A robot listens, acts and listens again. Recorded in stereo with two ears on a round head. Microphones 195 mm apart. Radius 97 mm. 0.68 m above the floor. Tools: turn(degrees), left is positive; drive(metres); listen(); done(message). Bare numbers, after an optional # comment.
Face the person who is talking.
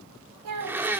turn(-90)
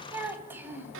# So it is at 10° right.
turn(-10)
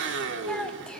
done("Facing the child speaking, 2 to 4 m away.")